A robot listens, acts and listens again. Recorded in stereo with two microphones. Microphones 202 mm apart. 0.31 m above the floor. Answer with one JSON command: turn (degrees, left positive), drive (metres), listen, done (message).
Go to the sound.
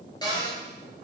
{"turn": 20}
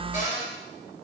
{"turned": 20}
{"turn": 140}
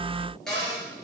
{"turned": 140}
{"drive": 1.0}
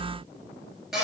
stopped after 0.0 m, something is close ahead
{"done": "Something is in my way. I am facing the cupboard door but have not reached it."}